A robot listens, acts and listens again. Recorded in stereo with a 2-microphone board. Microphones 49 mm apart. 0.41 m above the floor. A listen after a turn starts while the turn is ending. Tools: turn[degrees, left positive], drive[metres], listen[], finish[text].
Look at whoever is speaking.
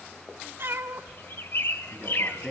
Action: turn[30]
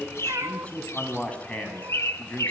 Thought: So it is at 150° left.
Action: turn[150]
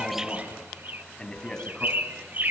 Thought: The man speaking is now 15° left.
Action: turn[15]
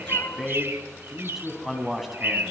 Action: finish[Found it: a man speaking, straight ahead.]